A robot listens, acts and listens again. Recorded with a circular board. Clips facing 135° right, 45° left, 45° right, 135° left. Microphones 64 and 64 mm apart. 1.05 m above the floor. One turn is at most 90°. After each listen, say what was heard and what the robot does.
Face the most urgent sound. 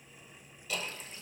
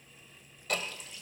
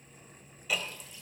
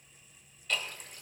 Keep listening.
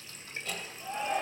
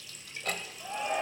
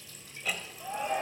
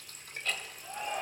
The shout: 25° right. Turn 25° right.
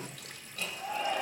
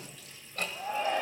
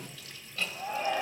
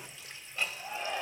Facing the shout, over 4 m away.